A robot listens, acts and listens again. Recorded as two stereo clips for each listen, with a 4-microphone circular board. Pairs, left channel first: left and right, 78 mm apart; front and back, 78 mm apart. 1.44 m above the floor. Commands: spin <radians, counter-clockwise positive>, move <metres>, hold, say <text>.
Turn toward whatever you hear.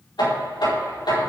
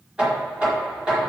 spin 1.83
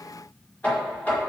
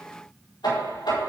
spin 0.35
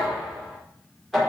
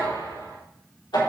say Facing the knocking.